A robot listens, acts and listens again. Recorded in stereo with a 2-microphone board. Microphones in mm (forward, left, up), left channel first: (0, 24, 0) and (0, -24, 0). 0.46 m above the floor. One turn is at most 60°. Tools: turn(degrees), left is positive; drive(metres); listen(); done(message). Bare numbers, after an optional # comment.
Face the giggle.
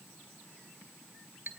listen()
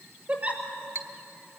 # The giggle: about 30° right or 150° right.
turn(-30)
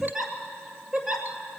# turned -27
done("Facing the giggle, 2 to 4 m away.")